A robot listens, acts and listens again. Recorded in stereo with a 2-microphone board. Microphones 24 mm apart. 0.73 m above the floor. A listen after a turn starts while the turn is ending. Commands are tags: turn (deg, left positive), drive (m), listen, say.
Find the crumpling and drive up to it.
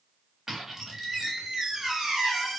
<listen/>
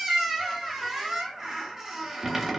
<listen/>
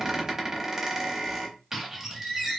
<say>I can't make out crumpling, only a squeak.</say>